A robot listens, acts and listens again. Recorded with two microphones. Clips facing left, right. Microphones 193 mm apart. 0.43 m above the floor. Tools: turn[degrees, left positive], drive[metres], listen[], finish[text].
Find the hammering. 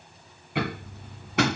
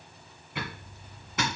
Thought: The hammering: about 65° left or 115° left.
Action: turn[65]
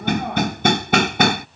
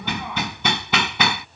Thought: So it is at 50° left.
Action: turn[50]
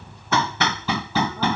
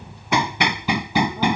Thought: The hammering is now 15° right.
Action: turn[-15]
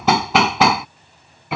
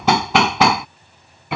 Action: finish[Found it: hammering, straight ahead.]